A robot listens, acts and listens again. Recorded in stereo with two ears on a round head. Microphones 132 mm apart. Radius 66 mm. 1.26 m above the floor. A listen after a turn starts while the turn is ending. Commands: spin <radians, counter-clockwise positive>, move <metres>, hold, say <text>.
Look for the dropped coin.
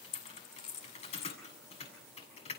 spin 0.79
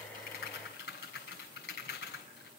hold
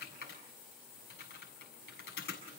say I heard a dropped coin, but can't make it out now. It was about straight ahead or 90° left.